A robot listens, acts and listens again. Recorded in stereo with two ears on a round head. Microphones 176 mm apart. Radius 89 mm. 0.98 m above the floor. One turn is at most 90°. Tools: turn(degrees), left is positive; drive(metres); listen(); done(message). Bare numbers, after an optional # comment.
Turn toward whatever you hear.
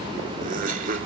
# The laughter: about 45° right or 135° right.
turn(-45)
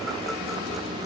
listen()
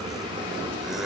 listen()
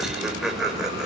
done("Found it: laughter, straight ahead, over 4 m away.")